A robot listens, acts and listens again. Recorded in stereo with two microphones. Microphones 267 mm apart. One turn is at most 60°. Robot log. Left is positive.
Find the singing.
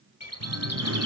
note: The singing: about 70° right or 110° right.
cmd yaw -60
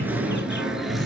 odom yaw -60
end: Found it: singing, straight ahead.